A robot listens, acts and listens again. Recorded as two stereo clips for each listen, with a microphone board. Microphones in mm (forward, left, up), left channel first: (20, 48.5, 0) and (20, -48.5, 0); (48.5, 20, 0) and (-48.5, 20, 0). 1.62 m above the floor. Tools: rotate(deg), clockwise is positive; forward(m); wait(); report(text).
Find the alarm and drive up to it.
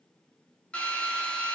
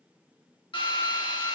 wait()
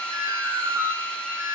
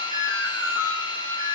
rotate(35)
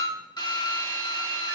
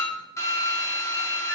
wait()
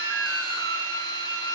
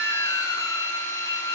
wait()
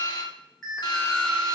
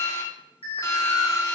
forward(1.0)
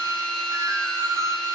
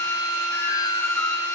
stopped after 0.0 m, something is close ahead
wait()
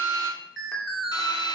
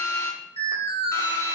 report("Something is in my way. I am facing the alarm but have not reached it.")